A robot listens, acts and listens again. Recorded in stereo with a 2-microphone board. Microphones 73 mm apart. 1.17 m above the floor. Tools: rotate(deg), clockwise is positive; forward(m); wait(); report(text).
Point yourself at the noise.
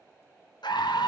rotate(-90)
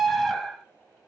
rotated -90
report("Facing the scream, under 1 m away.")